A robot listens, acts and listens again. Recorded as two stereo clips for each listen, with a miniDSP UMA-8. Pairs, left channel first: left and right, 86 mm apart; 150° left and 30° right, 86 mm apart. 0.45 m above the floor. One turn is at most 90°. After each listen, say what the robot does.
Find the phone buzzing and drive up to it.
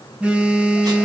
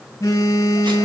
Turn 90° right.
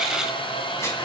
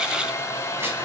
Turn 75° right.
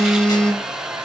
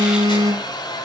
Turn 10° left.
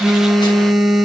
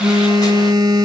Drive 1.0 m forward.
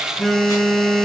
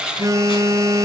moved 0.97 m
Drive 1.0 m forward.
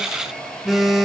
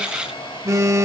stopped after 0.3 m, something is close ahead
I am next to the phone buzzing.